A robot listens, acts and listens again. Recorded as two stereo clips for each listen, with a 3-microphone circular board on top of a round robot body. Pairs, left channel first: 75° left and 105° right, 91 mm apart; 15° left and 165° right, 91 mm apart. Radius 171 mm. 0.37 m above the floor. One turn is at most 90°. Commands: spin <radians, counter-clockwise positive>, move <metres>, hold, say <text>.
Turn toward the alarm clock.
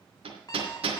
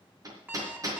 spin 1.57
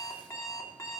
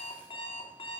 spin 0.35
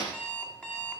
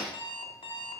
say Found it: an alarm clock, straight ahead, 2 to 4 m away.